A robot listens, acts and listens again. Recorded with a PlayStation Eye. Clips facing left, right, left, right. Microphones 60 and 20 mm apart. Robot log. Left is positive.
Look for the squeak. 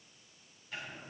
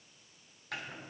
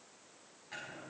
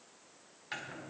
cmd idle
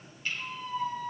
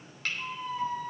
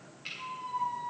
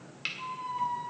cmd yaw -30
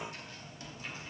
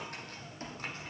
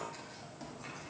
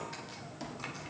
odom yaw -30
note: So it is at 140° right.
cmd yaw -140
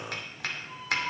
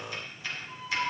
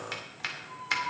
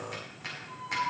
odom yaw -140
note: The squeak is now 10° right.
cmd yaw -10
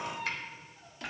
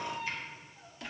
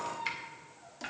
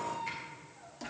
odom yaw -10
end: Facing the squeak, 1 to 2 m away.